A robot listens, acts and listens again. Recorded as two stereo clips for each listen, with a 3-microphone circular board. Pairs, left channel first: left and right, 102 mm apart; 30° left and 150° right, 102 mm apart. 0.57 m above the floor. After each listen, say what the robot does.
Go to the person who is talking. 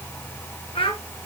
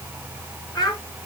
Turn 75° left.
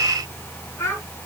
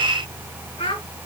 Turn 30° left.
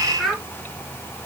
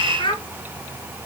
Drive 1.0 m forward.
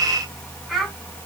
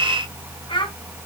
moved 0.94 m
Drive 1.0 m forward.
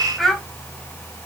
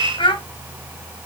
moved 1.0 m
Drive 1.0 m forward.
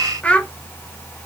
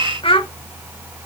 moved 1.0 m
Turn 15° left.
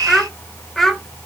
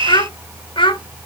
Drive 1.0 m forward.
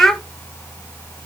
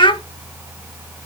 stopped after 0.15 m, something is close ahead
Arrived at the child speaking, straight ahead.